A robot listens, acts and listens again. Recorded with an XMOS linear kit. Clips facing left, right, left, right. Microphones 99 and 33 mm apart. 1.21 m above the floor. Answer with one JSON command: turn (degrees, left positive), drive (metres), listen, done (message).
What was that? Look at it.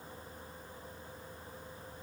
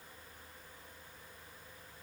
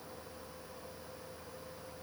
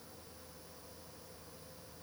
{"listen": true}
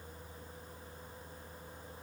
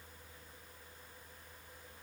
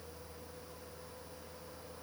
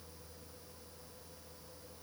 {"listen": true}
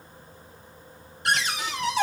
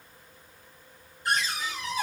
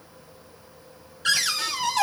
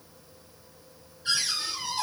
{"turn": 90}
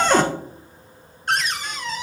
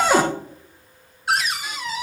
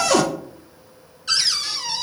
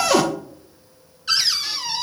{"done": "Found it: a cupboard door, straight ahead, under 1 m away."}